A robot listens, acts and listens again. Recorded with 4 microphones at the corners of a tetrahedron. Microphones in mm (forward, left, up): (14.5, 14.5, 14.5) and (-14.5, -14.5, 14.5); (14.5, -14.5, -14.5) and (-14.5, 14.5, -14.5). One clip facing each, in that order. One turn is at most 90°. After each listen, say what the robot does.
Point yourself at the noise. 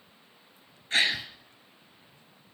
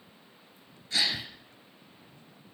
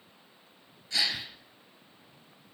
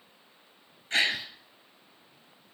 Turn 90° left.
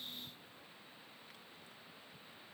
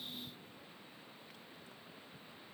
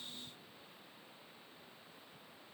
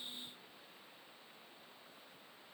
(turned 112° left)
Turn 20° right.
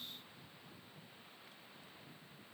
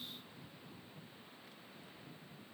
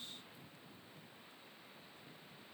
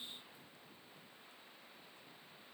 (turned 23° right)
I heard a gasp from this way, but can't make it out now.